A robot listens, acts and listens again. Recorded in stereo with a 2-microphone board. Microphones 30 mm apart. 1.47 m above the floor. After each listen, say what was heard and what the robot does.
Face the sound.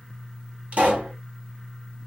The pop: about 50° right or 130° right. Turn 50° right.
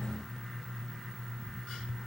Keep listening.
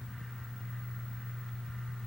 I heard a pop, but can't make it out now. It was about straight ahead or 80° right.